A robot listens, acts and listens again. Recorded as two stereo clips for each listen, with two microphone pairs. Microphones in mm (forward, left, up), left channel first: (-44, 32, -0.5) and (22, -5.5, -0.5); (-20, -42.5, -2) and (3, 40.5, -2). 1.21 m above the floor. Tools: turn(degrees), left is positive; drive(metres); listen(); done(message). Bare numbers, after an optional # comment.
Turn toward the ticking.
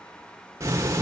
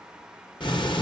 # The ticking: 80° right.
turn(-80)
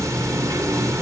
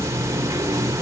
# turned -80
# The ticking is now 20° left.
turn(20)
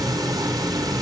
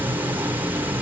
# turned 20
done("Found it: ticking, straight ahead, 1 to 2 m away.")